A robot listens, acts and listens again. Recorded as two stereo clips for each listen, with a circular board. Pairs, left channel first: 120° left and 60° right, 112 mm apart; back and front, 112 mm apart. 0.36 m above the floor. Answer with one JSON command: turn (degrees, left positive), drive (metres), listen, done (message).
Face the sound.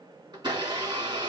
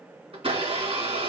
{"turn": -15}
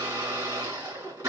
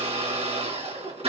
{"done": "Found it: a blender, straight ahead."}